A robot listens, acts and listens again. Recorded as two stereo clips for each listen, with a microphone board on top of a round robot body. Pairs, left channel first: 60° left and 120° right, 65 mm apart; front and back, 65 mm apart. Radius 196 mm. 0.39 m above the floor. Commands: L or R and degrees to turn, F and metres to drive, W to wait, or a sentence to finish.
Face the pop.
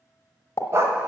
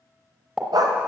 L100
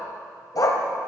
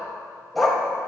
I heard a pop from this way, but can't make it out now.